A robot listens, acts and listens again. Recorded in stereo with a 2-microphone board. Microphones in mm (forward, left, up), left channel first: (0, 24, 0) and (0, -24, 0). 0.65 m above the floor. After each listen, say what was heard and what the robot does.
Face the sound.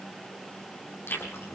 The chewing: about 55° left or 125° left. Turn 55° left.
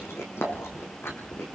So it is at 70° left. Turn 70° left.
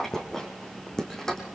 The chewing is now 10° left. Turn 10° left.
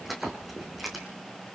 Found it: chewing, straight ahead, over 4 m away.